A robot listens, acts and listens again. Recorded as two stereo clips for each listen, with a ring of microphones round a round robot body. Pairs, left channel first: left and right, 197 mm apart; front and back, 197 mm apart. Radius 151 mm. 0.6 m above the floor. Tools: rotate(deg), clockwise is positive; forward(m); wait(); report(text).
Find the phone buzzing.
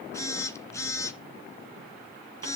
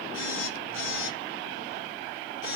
rotate(-15)
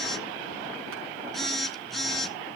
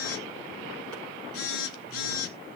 report("Facing the phone buzzing, 2 to 4 m away.")